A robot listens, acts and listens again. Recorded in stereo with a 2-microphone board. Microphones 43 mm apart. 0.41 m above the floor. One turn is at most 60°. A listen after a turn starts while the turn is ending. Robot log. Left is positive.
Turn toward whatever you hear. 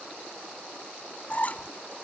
note: The squeak: about 35° left or 145° left.
cmd yaw +35
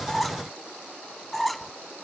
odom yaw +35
end: Facing the squeak.